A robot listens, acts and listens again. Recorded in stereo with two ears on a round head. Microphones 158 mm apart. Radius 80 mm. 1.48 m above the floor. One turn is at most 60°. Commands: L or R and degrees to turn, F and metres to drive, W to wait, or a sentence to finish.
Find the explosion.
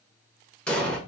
L30
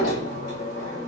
W
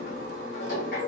I heard an explosion, but can't make it out now. It was about 25° right or 145° left.